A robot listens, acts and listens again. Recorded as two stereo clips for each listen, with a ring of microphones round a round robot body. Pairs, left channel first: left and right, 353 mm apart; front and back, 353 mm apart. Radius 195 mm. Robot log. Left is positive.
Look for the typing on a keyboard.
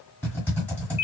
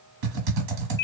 note: The typing on a keyboard: 175° left.
cmd yaw +175
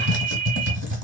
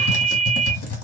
note: The typing on a keyboard is now 45° right.
cmd yaw -45
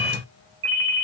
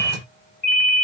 cmd idle
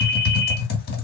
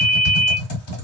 note: The typing on a keyboard is now 30° left.
cmd yaw +30
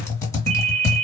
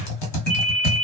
note: The typing on a keyboard is now 10° left.
cmd yaw +10
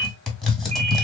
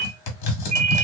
end: Found it: typing on a keyboard, straight ahead, 1 to 2 m away.